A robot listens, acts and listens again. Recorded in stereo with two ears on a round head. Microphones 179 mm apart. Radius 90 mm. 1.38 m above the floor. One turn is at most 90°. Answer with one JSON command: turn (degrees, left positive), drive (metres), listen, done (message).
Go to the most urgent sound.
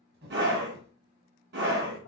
{"turn": -55}
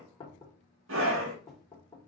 {"turn": -65}
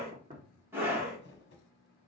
{"turn": -10}
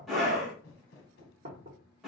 {"drive": 1.0}
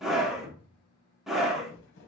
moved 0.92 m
{"drive": 1.0}
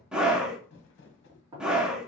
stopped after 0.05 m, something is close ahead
{"done": "Arrived at the scream, straight ahead."}